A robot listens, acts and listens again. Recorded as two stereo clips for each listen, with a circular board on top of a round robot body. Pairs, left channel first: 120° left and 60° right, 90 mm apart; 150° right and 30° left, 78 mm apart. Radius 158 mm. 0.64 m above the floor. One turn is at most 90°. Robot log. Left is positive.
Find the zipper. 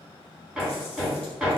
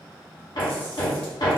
cmd idle
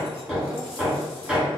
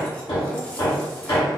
cmd idle
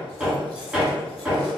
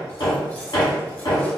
end: I can't make out a zipper, only hammering.